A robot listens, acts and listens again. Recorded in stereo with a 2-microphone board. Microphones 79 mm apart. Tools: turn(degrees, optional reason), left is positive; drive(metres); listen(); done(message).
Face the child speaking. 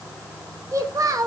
turn(degrees=-50, reason="The child speaking: about 50° right or 130° right.")
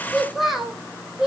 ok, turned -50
done("Found it: a child speaking, straight ahead.")